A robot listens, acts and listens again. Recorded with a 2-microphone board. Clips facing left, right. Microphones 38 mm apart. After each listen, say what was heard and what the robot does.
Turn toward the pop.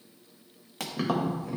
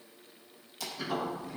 The pop: about 60° left or 120° left. Turn 60° left.
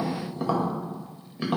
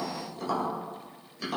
Keep listening.
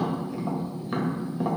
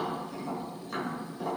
I heard a pop, but can't make it out now. It was about straight ahead or 60° left.